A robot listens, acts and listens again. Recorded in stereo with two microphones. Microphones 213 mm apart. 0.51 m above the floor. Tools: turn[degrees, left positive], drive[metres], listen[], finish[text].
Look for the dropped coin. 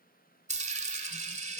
Thought: The dropped coin: about 35° right or 145° right.
Action: turn[-35]
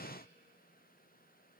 Action: listen[]
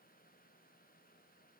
Action: finish[I heard a dropped coin, but can't make it out now. It was about straight ahead or 110° right.]